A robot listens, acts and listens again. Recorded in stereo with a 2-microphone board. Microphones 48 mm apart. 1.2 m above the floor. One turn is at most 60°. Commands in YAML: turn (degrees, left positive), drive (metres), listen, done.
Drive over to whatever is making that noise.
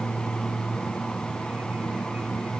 listen: true
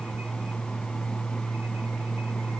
listen: true
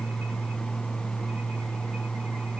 done: "I can't make out anything to turn to."